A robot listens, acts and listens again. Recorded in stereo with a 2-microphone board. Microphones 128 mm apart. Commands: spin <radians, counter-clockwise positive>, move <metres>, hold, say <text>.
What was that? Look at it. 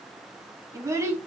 spin -0.35
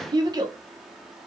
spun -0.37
spin -0.52
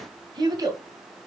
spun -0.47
spin -0.52
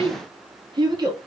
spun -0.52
spin -0.61
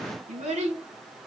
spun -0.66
spin -2.09
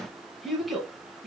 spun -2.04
say Found it: a child speaking, straight ahead, 1 to 2 m away.